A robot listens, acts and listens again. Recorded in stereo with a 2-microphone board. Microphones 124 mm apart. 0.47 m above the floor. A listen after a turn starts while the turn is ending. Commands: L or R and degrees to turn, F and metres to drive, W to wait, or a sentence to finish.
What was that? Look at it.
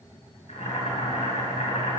L90
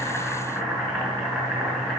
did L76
Found it: boiling, straight ahead, over 4 m away.